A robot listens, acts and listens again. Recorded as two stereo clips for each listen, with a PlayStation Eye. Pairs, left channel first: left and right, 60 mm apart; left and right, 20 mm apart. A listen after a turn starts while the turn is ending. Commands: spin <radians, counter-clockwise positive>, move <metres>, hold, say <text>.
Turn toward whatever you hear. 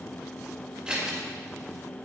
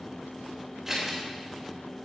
spin -0.26
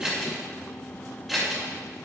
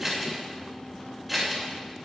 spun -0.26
say Facing the scissors, 2 to 4 m away.